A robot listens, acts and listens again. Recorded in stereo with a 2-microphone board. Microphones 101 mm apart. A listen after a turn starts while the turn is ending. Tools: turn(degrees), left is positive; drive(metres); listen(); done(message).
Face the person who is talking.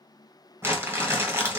listen()
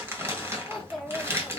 turn(degrees=30)
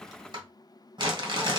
listen()
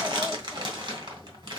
listen()
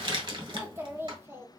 turn(degrees=-25)
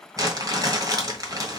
listen()
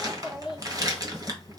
turn(degrees=-10)
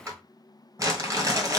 listen()
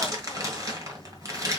listen()
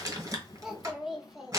done("Facing the child speaking.")